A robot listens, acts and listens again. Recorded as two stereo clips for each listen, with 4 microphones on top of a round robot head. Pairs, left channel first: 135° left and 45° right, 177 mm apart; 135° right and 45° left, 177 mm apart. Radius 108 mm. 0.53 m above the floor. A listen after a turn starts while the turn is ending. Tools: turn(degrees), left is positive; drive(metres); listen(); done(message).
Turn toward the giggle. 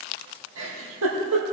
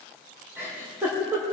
turn(degrees=-35)
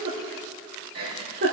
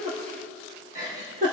done("Facing the giggle.")